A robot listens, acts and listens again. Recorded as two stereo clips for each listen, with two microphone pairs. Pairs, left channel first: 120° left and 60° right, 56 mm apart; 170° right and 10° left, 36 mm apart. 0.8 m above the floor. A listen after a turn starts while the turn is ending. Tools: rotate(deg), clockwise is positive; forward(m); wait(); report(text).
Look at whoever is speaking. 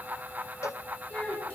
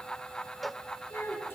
rotate(170)
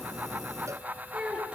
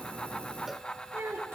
rotate(-15)
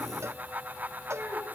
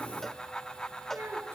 report("Facing the child speaking, over 4 m away.")